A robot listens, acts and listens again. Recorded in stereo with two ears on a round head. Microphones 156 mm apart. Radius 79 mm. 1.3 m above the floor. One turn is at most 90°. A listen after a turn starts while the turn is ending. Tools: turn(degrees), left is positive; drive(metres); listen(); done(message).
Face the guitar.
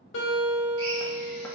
turn(degrees=90)
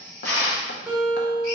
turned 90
done("Found it: a guitar, straight ahead.")